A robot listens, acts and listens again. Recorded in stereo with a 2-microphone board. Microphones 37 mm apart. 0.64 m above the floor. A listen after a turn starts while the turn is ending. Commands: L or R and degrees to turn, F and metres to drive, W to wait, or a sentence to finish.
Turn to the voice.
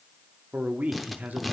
R45
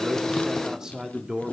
R20
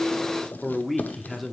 Facing the man speaking, 1 to 2 m away.